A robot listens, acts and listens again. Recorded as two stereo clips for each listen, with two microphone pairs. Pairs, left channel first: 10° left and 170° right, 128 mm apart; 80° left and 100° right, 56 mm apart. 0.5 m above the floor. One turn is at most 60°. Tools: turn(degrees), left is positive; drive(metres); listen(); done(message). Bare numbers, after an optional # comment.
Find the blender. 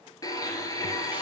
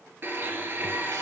# The blender: 50° right.
turn(-50)
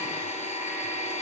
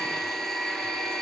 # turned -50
done("Found it: a blender, straight ahead, 1 to 2 m away.")